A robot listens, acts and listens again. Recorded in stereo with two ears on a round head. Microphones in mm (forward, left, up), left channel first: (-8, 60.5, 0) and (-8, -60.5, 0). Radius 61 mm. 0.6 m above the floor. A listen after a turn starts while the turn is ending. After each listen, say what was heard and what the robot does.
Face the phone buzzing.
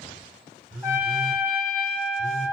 The phone buzzing: about 70° right or 110° right. Turn 70° right.
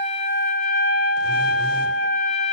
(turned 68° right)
Keep listening.
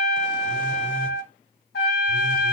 Keep listening.
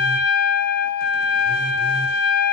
I heard a phone buzzing, but can't make it out now. It was about 5° right or 40° right.